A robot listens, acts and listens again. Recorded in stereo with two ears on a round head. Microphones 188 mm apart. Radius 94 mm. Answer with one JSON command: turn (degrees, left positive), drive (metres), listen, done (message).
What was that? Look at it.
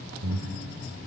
{"turn": -70}
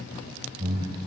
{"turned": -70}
{"turn": -30}
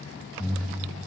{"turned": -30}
{"done": "Found it: breathing, straight ahead, 1 to 2 m away."}